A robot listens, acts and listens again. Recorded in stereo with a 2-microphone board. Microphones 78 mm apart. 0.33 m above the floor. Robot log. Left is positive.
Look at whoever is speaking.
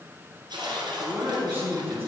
note: The man speaking: about 30° right or 150° right.
cmd yaw -30
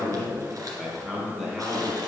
end: Facing the man speaking, 2 to 4 m away.